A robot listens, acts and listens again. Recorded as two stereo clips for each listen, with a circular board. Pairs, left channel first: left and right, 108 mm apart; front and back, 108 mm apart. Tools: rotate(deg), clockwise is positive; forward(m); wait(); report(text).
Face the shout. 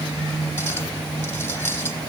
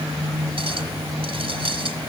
wait()
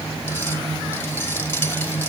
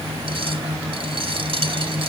wait()
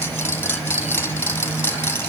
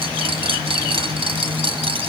report("I can't make out a shout to turn to.")